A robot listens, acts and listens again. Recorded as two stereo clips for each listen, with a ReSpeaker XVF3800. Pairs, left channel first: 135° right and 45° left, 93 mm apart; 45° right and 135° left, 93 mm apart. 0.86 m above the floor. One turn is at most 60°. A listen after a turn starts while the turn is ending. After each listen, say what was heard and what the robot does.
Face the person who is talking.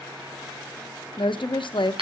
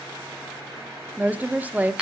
The woman speaking: 155° right. Turn 60° right.
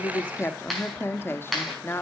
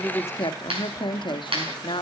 The woman speaking is now 75° right. Turn 60° right.
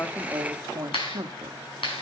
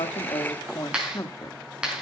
Facing the woman speaking, 1 to 2 m away.